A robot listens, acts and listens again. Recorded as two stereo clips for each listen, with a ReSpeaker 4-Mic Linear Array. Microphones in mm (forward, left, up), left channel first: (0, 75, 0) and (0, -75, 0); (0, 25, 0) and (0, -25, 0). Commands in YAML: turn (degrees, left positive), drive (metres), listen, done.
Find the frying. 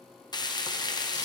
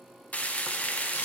turn: 30
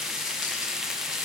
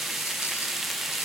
done: "Found it: frying, straight ahead."